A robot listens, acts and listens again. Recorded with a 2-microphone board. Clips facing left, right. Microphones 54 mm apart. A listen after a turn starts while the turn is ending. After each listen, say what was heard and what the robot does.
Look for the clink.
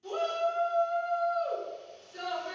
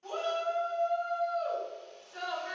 Keep listening.
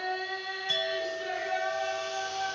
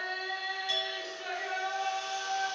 The clink: about 30° left or 150° left. Turn 30° left.
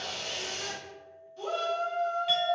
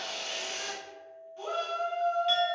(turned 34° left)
Found it: a clink, straight ahead, 1 to 2 m away.